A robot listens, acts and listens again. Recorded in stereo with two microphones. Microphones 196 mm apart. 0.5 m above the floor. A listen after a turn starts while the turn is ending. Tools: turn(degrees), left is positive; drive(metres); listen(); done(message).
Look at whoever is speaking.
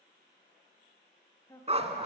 turn(degrees=20)
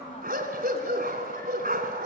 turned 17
listen()
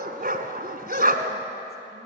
listen()
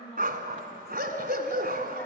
turn(degrees=145)
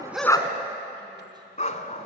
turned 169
turn(degrees=-25)
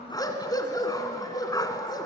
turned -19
listen()
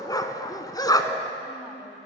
done("Facing where the woman speaking came from. I can't hear it now.")